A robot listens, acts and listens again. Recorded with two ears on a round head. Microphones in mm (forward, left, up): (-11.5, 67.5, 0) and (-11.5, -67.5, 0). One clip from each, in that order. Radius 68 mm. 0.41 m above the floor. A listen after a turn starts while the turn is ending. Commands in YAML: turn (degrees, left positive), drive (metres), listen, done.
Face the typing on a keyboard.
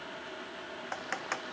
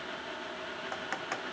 turn: 20
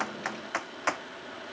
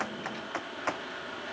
turn: 135
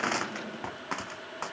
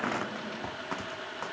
turn: 30
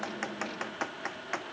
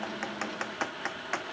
turn: -10
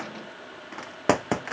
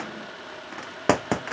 done: "Found it: typing on a keyboard, straight ahead."